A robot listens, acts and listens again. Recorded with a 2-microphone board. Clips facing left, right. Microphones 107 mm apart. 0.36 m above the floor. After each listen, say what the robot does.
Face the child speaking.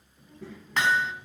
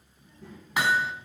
Turn 90° left.
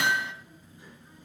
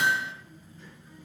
Turn 15° left.
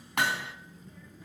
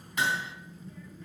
Facing the child speaking, 2 to 4 m away.